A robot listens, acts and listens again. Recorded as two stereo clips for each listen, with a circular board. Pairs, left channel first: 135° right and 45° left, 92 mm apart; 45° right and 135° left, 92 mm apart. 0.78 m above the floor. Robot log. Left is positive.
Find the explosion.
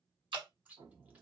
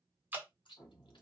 note: The explosion: 15° left.
cmd yaw +15
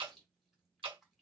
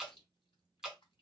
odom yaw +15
end: I heard an explosion from this way, but can't make it out now.